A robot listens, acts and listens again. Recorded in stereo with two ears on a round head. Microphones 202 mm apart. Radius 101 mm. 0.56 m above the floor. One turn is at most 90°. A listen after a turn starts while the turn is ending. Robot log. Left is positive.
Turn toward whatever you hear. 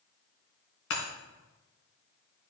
note: The breaking glass: about 70° left or 110° left.
cmd yaw +70
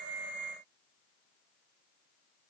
cmd idle
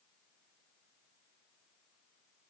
end: I heard breaking glass, but can't make it out now. It was about straight ahead or 40° left.